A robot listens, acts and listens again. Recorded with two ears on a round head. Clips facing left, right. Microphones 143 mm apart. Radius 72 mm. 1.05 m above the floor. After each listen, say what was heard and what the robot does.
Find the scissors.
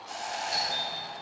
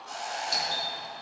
Keep listening.
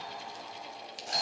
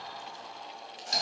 The scissors: about 40° left or 140° left. Turn 40° left.
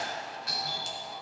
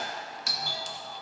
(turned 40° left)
Keep listening.
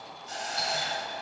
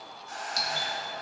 Keep listening.
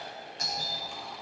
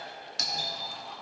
I heard scissors, but can't make it out now. It was about straight ahead or 100° left.